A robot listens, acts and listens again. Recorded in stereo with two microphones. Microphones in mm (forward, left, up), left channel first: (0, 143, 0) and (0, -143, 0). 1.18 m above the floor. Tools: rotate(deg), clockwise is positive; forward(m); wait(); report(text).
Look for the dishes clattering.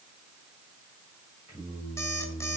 wait()
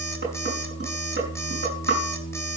rotate(40)
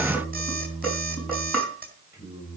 report("Found it: dishes clattering, straight ahead, over 4 m away.")